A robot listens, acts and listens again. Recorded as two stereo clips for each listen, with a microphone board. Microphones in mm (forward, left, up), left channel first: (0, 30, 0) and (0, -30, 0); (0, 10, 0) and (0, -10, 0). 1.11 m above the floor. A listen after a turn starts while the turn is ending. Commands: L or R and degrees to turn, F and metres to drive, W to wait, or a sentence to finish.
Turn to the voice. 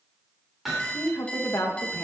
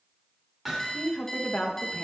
L60
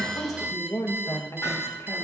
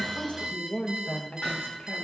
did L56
L60
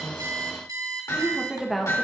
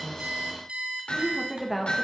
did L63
Found it: a woman speaking, straight ahead.